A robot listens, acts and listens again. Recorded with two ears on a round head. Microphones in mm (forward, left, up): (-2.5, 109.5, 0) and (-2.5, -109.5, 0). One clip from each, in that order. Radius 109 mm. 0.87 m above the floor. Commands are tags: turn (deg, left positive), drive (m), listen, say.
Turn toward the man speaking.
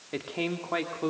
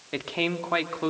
<turn deg="-35"/>
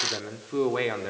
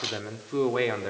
<say>Facing the man speaking.</say>